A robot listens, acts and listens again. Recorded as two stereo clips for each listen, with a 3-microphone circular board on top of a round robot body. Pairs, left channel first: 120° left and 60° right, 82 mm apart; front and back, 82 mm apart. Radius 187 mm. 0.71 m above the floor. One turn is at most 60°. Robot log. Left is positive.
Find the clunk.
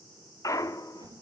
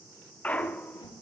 note: The clunk: 75° left.
cmd yaw +60
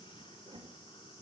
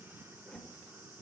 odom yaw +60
note: Nothing new. It was at 15° left.
cmd yaw +15
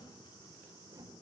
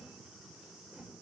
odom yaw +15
end: Facing where the clunk came from. I can't hear it now.